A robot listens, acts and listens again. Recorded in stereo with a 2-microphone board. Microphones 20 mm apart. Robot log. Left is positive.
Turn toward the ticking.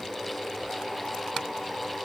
cmd idle
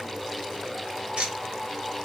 note: The ticking: about 65° right or 115° right.
cmd yaw -65
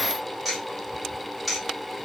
end: Found it: ticking, straight ahead, 1 to 2 m away.